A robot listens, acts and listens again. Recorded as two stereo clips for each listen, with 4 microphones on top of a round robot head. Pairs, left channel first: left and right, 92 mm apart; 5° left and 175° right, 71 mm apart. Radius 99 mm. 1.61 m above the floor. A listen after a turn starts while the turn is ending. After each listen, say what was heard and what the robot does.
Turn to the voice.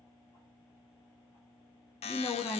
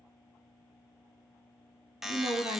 The woman speaking: 165° left. Turn 165° left.
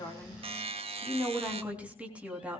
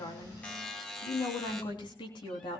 The woman speaking is now 15° right. Turn 15° right.
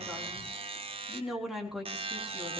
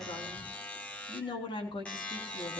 Facing the woman speaking, 2 to 4 m away.